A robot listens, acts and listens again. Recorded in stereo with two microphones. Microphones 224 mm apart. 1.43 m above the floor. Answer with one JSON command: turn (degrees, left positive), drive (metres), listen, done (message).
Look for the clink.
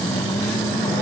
{"listen": true}
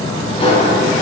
{"listen": true}
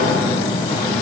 {"done": "I can't make out a clink, only a sliding door."}